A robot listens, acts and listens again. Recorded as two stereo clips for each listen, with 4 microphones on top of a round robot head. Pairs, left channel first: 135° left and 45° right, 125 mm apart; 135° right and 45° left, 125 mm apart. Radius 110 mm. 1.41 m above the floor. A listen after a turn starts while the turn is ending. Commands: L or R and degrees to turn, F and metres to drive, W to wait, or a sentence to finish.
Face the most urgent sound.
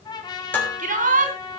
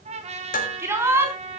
R30
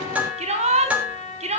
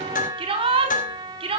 Facing the shout.